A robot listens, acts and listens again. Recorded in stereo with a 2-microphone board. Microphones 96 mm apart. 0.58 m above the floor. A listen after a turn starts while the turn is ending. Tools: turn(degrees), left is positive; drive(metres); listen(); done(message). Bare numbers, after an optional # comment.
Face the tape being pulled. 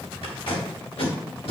turn(90)
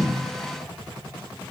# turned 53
# Nothing new. It was at 35° left.
turn(35)
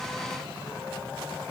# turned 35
listen()
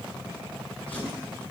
done("Facing where the tape being pulled came from. I can't hear it now.")